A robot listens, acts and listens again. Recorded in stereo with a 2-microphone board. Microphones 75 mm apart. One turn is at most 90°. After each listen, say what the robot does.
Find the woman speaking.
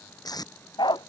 Keep listening.
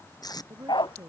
Turn 40° right.
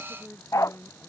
Found it: a woman speaking, straight ahead.